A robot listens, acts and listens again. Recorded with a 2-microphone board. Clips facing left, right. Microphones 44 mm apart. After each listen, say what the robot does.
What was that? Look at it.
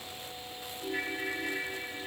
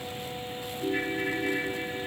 Turn 30° right.
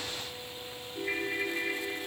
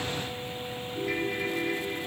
Turn 20° left.
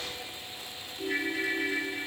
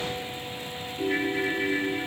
Found it: a ringtone, straight ahead.